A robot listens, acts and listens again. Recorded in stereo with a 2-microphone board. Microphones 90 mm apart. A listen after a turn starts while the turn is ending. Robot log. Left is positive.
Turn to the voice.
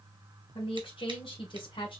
note: The woman speaking: about 70° left or 110° left.
cmd yaw +70
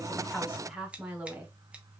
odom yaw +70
note: So it is at 20° right.
cmd yaw -20
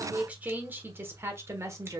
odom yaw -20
note: The woman speaking is now 35° right.
cmd yaw -35
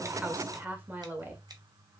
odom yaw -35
note: The woman speaking is now 25° right.
cmd yaw -25
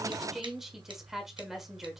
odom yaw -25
end: Found it: a woman speaking, straight ahead, 1 to 2 m away.